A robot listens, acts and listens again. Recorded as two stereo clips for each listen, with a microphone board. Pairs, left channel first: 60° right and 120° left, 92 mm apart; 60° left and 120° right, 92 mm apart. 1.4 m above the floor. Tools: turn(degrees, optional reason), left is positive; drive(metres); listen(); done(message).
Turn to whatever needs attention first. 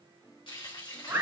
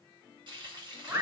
listen()
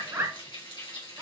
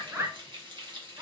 listen()
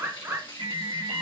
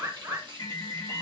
turn(degrees=115, reason="The alarm: 115° left.")
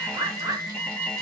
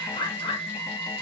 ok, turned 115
turn(degrees=15, reason="The alarm is now 15° left.")
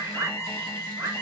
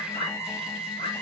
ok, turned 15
done("Facing the alarm.")